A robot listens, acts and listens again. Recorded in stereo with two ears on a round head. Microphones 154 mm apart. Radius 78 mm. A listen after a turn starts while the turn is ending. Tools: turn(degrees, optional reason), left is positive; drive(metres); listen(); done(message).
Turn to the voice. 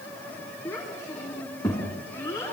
turn(degrees=15, reason="The child speaking: about 15° left or 165° left.")
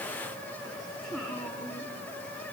done("Facing the child speaking, 2 to 4 m away.")